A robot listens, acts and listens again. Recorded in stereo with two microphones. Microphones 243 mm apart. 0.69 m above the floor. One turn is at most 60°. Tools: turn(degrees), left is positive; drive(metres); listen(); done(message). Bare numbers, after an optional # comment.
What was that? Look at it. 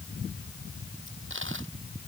# The dropped coin: about 55° right or 125° right.
turn(-55)
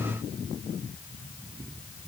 listen()
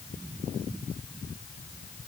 done("I heard a dropped coin, but can't make it out now. It was about straight ahead or 70° right.")